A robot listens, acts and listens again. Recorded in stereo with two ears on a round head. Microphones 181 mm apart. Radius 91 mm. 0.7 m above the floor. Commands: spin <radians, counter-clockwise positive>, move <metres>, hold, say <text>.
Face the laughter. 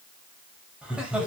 spin -0.52
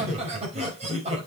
spin -2.53
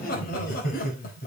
spin 0.79
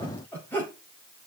spin 0.17
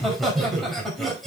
say Found it: laughter, straight ahead, over 4 m away.